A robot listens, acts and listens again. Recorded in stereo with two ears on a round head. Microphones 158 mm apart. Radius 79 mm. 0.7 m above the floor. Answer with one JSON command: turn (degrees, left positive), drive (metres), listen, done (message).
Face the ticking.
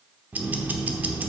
{"turn": -30}
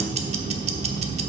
{"turn": -140}
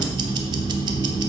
{"turn": -25}
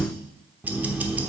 {"turn": -10}
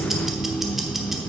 {"done": "Found it: ticking, straight ahead."}